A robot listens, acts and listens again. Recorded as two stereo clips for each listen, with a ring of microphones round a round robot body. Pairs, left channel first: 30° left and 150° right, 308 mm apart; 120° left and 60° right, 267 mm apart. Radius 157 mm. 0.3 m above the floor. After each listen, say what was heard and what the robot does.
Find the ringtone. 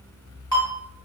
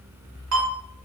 The ringtone: 45° right. Turn 45° right.
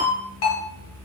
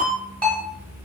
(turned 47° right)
Found it: a ringtone, straight ahead, 1 to 2 m away.